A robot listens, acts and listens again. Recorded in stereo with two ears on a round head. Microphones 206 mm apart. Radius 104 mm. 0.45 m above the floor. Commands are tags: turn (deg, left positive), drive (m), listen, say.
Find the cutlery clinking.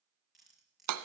<turn deg="30"/>
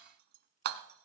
<listen/>
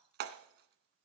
<listen/>
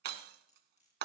<turn deg="145"/>
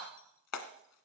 <listen/>
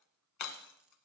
<listen/>
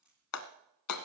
<say>Found it: cutlery clinking, straight ahead, over 4 m away.</say>